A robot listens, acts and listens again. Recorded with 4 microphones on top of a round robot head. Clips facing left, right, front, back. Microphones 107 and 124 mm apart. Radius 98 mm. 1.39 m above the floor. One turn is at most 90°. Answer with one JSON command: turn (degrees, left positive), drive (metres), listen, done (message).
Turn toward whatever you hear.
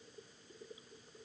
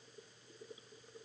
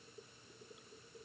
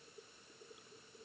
{"listen": true}
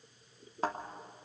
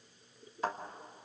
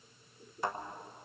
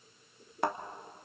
{"turn": 90}
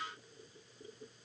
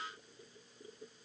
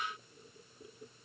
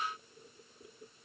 {"turn": 70}
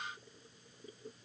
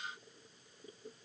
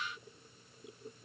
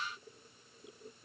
{"done": "Facing where the thud came from. I can't hear it now."}